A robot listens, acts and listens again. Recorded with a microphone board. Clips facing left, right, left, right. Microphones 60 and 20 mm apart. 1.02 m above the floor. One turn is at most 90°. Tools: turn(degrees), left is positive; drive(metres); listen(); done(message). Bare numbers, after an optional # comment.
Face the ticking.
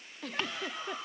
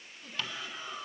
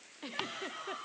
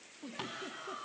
# The ticking: about 35° left or 145° left.
turn(35)
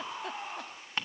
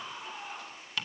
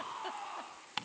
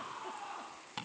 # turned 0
# The ticking: about 35° left or 145° left.
turn(35)
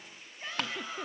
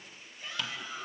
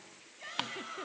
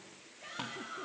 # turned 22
# So it is at 125° left.
turn(90)
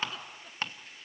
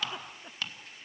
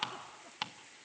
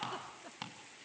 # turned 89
# The ticking is now 35° left.
turn(35)
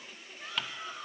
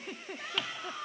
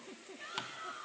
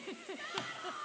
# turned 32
listen()
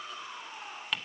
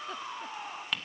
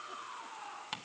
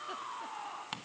done("Found it: ticking, straight ahead, 1 to 2 m away.")